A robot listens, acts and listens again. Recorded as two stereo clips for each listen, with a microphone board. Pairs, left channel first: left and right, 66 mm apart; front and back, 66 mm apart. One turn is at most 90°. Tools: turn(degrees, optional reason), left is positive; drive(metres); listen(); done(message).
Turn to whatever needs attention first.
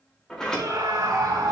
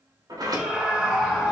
turn(degrees=-90, reason="The scream: 105° right.")
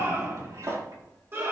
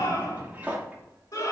turn(degrees=-35, reason="The scream is now 35° right.")
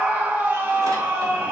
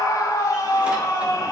turn(degrees=-25, reason="The scream is now 25° right.")
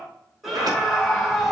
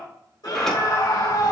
done("Facing the scream.")